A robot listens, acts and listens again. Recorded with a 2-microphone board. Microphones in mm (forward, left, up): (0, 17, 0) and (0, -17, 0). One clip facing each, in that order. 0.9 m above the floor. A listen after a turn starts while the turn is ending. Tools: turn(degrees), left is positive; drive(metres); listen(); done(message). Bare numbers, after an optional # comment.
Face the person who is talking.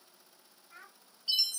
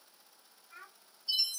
turn(30)
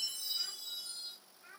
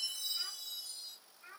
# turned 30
# So it is at 25° right.
turn(-25)
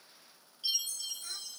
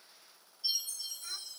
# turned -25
listen()
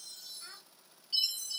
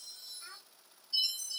done("Found it: a child speaking, straight ahead, 2 to 4 m away.")